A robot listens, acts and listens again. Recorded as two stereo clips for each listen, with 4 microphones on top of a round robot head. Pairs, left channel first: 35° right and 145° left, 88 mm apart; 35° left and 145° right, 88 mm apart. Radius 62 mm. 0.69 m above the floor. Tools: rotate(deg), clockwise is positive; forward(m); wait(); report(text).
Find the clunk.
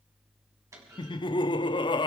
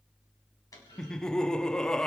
rotate(-85)
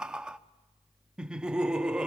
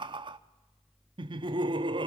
report("I heard a clunk from this way, but can't make it out now.")